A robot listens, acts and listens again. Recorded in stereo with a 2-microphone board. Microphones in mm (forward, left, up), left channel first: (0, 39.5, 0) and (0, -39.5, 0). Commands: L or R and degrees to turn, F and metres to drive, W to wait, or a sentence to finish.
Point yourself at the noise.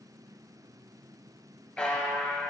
L15
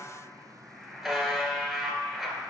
Facing the buzzer.